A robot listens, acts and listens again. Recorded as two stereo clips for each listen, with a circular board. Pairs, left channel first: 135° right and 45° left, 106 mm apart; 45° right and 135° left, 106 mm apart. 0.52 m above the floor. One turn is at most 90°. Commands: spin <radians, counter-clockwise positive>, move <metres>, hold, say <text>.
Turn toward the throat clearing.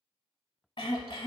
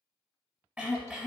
spin -1.57
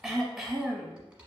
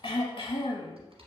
spin -0.79
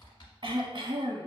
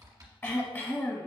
spin 0.35
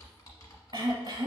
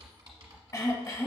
say Facing the throat clearing, under 1 m away.